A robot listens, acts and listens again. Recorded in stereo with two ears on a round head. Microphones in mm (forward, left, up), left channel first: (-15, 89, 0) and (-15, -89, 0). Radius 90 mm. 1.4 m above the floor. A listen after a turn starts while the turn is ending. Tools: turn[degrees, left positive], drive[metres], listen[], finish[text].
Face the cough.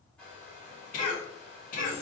Thought: The cough: about 40° left or 140° left.
Action: turn[40]
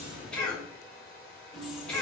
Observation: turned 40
Action: finish[Facing the cough, 1 to 2 m away.]